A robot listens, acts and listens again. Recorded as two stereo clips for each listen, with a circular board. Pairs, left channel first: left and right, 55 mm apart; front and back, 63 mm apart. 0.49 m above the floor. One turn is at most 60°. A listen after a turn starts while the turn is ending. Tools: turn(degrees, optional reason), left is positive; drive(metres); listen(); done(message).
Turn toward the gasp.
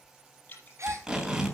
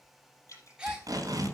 turn(degrees=-60, reason="The gasp: 105° right.")
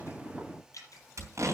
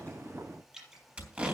turn(degrees=-45, reason="Nothing new. It was at 45° right.")
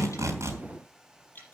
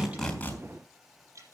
done("I heard a gasp from this way, but can't make it out now.")